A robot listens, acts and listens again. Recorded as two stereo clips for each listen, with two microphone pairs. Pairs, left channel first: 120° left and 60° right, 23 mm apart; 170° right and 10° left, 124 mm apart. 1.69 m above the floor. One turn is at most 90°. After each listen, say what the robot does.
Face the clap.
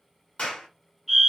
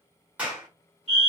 Turn 90° left.
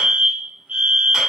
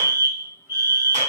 Keep listening.
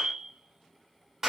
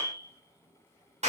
Found it: a clap, straight ahead, 1 to 2 m away.